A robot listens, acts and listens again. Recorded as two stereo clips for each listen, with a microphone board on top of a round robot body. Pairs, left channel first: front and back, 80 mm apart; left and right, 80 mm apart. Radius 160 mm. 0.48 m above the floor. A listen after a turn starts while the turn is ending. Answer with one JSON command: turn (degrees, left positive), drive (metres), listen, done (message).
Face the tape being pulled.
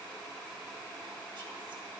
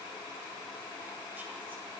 {"listen": true}
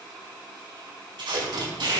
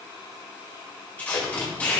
{"turn": 160}
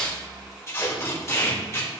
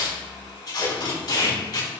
{"turn": 55}
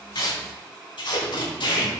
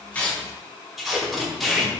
{"done": "Found it: tape being pulled, straight ahead, over 4 m away."}